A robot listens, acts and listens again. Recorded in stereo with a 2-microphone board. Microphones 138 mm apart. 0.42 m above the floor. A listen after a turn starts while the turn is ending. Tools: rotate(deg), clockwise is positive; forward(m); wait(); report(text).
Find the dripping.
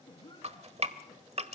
rotate(50)
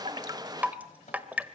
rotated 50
rotate(15)
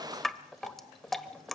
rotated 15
report("Found it: dripping, straight ahead, 1 to 2 m away.")